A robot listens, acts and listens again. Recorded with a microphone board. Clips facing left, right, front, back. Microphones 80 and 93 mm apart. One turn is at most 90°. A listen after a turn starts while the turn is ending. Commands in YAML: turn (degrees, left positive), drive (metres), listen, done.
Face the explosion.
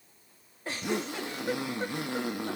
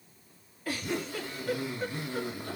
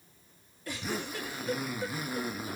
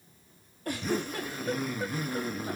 listen: true
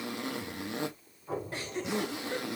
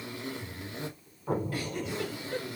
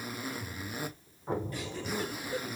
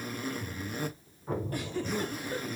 turn: -60
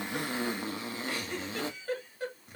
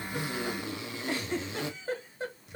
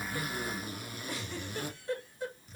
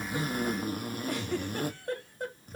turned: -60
done: "Facing where the explosion came from. I can't hear it now."